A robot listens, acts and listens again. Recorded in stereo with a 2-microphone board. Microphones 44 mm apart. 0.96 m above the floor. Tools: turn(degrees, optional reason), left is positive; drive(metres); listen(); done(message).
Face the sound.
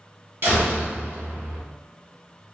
turn(degrees=-60, reason="The door slam: about 60° right or 120° right.")
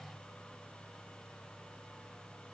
listen()
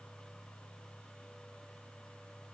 done("I heard a door slam, but can't make it out now. It was about straight ahead or 60° right.")